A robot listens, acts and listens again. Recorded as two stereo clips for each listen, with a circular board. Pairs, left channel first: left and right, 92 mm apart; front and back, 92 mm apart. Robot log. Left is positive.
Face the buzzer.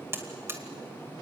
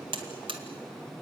note: The buzzer: 155° right.
cmd yaw -155
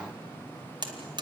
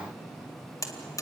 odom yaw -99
note: The buzzer is now 55° right.
cmd yaw -55
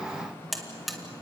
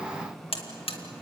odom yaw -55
end: Facing the buzzer.